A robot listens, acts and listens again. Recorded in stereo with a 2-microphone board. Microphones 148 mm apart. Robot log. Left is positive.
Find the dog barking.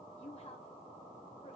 cmd idle
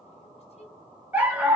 cmd yaw -30
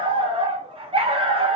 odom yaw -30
note: So it is at 140° right.
cmd yaw -140
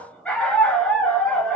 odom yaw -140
note: The dog barking is now 10° left.
cmd yaw +10
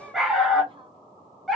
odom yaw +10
end: Facing the dog barking.